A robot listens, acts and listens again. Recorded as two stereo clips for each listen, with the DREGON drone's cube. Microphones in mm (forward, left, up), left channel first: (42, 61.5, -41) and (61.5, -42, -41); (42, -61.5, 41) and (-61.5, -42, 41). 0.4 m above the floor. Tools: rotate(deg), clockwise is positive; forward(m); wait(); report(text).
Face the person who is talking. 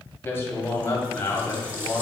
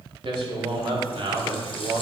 rotate(-160)
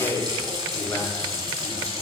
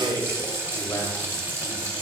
rotate(-45)
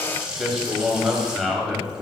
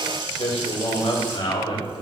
rotate(-10)
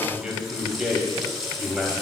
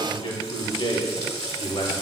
report("Found it: a man speaking, straight ahead, 1 to 2 m away.")